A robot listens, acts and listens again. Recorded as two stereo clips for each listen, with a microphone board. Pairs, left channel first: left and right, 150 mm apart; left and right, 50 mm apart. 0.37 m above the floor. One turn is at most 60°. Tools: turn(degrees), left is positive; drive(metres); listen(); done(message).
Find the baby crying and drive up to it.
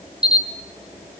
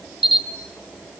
listen()
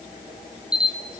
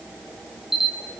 listen()
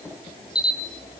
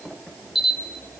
done("I can't make out a baby crying to turn to.")